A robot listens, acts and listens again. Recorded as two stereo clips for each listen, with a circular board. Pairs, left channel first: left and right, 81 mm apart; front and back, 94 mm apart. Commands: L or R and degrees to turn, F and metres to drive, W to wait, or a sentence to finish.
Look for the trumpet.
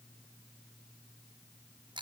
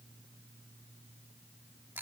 W
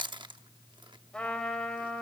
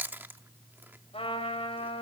L10
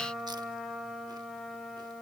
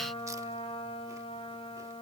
Facing the trumpet.